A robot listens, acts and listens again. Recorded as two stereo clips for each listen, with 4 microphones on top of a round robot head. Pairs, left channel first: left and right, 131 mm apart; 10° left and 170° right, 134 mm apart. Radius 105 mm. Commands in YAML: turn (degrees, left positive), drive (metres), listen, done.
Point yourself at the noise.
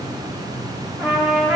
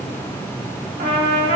turn: -175
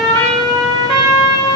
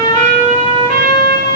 turn: -45
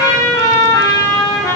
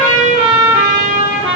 turn: 30
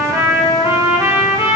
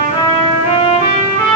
turn: -25
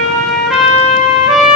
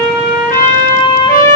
done: "Facing the trumpet."